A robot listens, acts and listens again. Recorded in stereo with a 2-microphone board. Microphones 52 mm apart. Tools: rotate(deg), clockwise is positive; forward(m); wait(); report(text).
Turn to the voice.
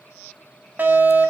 wait()
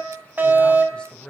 rotate(-20)
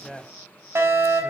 report("Found it: a man speaking, straight ahead, 2 to 4 m away.")